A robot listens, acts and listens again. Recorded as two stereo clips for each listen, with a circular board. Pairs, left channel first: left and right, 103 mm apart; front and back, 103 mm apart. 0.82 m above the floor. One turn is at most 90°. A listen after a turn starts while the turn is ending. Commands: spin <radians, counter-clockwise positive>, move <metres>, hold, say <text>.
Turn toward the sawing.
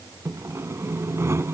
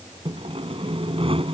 spin -1.57
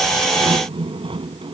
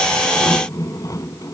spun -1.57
spin -1.05
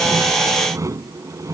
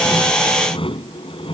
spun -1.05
spin -0.52
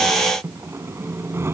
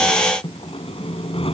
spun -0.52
spin -0.44
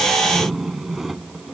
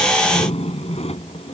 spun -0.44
say Found it: sawing, straight ahead.